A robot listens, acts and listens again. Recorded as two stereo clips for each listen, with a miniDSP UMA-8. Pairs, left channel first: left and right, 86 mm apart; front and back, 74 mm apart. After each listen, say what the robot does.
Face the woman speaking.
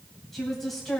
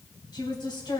Found it: a woman speaking, straight ahead.